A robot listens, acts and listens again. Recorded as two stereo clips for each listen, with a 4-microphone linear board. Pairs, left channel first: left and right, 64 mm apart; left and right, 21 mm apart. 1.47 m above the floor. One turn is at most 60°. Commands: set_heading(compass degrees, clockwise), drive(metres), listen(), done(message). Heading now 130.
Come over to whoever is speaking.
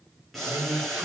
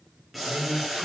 set_heading(190)
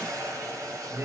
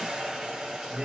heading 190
set_heading(240)
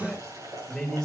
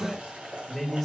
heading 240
drive(1.0)
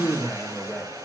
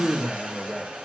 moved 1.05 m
drive(1.0)
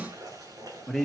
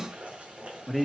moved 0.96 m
drive(1.0)
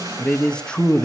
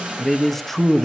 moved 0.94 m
set_heading(225)
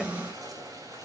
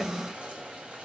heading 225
listen()
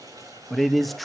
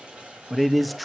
drive(1.0)
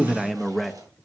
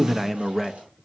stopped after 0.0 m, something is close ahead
done("Arrived at the man speaking, straight ahead.")